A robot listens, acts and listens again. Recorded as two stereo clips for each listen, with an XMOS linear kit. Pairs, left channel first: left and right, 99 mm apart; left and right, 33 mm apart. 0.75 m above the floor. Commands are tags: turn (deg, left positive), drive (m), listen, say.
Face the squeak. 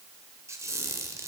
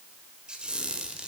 <turn deg="-30"/>
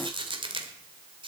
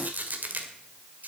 <turn deg="-120"/>
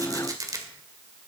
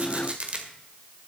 <turn deg="-35"/>
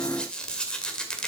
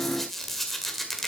<turn deg="10"/>
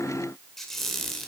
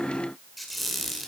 <say>Facing the squeak.</say>